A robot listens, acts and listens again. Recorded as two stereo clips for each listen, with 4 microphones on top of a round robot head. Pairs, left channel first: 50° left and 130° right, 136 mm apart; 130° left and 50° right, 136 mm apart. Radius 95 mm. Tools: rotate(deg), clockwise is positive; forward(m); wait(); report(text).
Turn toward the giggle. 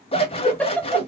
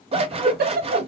rotate(35)
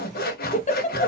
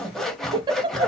rotate(-10)
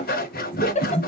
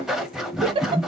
report("Facing the giggle, under 1 m away.")